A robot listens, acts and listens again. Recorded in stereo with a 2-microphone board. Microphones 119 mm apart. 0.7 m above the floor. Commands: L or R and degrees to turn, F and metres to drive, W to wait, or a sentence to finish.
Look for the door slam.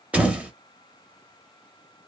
R30
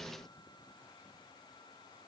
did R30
W
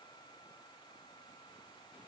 I heard a door slam, but can't make it out now. It was about 20° left or 140° right.